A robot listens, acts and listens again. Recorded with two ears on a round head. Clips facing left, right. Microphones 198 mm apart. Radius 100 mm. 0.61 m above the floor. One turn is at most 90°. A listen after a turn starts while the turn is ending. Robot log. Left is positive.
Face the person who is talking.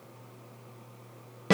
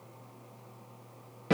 cmd idle
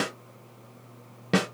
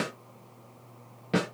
cmd idle
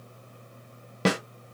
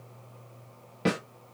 end: I can't make out anyone speaking to turn to.